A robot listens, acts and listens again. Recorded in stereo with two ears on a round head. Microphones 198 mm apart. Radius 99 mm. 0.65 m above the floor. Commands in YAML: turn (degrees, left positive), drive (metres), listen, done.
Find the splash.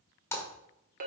turn: 30
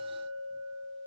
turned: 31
listen: true
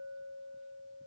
done: "I heard a splash, but can't make it out now. It was about 20° right or 135° left."